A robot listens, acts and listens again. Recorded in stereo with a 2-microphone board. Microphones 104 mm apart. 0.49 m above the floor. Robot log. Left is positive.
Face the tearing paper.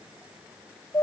cmd idle
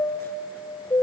cmd idle
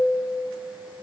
end: I can't make out tearing paper, only a chime.